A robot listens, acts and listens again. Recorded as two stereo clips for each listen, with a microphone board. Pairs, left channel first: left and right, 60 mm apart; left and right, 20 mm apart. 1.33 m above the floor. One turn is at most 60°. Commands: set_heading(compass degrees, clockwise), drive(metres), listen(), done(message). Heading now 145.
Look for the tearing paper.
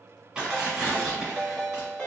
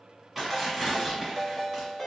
set_heading(175)
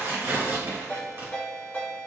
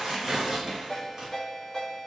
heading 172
set_heading(232)
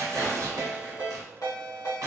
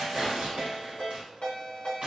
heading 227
set_heading(287)
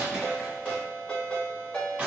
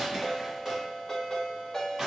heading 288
set_heading(313)
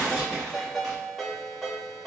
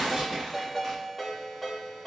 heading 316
done("Facing the tearing paper.")